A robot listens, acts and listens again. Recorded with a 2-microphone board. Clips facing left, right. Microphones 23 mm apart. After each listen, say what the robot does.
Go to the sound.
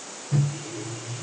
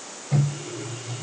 Turn 40° right.
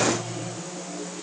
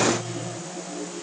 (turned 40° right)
Drive 1.0 m forward.
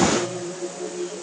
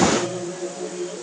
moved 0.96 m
Drive 1.0 m forward.
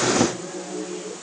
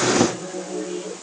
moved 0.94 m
Turn 15° right.
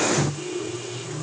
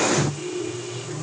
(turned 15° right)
Drive 1.0 m forward.
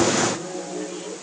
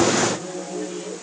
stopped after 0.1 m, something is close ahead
I am next to the microwave.